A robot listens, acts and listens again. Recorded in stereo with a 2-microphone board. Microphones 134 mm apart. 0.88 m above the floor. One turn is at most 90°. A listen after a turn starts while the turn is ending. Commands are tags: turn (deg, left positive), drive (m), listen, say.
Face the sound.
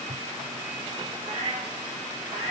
<turn deg="-60"/>
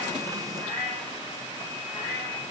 <say>Found it: a cat meowing, straight ahead.</say>